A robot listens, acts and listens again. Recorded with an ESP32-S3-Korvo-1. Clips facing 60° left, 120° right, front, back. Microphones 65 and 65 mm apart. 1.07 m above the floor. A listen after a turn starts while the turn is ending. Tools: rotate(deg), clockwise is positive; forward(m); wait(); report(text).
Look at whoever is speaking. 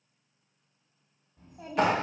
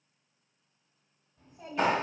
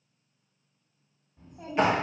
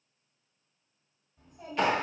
rotate(-40)
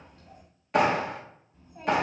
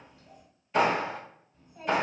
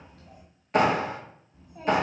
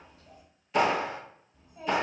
report("Facing the child speaking.")